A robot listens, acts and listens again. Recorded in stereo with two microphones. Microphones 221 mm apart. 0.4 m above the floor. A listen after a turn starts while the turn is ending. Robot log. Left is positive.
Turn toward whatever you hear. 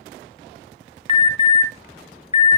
note: The alarm: about 30° left or 150° left.
cmd yaw +30
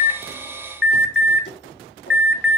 note: So it is at 115° left.
cmd yaw +115
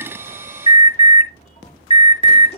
note: The alarm is now 30° left.
cmd yaw +30
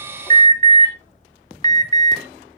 note: The alarm is now 20° left.
cmd yaw +20
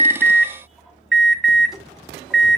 end: Found it: an alarm, straight ahead, 1 to 2 m away.